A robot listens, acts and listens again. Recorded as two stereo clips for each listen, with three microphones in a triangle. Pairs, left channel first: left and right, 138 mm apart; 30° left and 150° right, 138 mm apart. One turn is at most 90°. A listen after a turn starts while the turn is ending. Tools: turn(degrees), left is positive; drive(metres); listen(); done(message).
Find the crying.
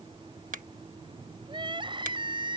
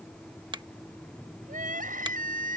turn(degrees=-90)
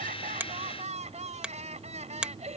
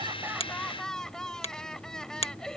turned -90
turn(degrees=-55)
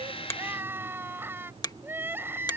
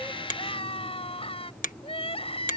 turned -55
turn(degrees=-15)
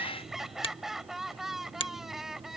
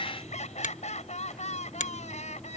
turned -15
done("Found it: crying, straight ahead.")